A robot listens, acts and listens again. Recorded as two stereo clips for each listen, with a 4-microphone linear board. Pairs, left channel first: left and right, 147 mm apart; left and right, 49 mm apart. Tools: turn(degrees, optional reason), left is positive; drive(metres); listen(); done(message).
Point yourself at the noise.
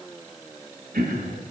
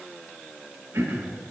turn(degrees=-90)
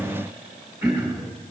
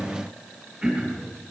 turn(degrees=-10, reason="So it is at 10° right.")
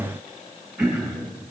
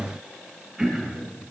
done("Facing the throat clearing, 1 to 2 m away.")